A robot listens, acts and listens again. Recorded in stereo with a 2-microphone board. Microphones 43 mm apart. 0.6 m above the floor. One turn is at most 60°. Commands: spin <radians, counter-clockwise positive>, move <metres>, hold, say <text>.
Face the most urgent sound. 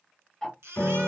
spin -1.05
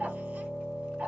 spin -0.52
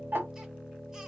hold
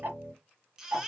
spin -0.26
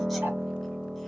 hold
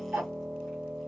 hold
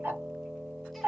say I heard a baby crying from this way, but can't make it out now.